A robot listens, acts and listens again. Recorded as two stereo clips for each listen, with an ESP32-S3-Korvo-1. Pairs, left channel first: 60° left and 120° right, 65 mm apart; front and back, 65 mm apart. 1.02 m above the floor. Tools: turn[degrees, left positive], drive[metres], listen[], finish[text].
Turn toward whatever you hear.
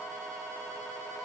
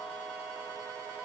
Action: listen[]
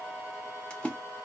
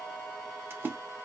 Thought: The splash: 130° left.
Action: turn[130]
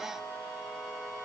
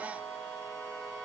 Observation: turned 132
Action: finish[I heard a splash from this way, but can't make it out now.]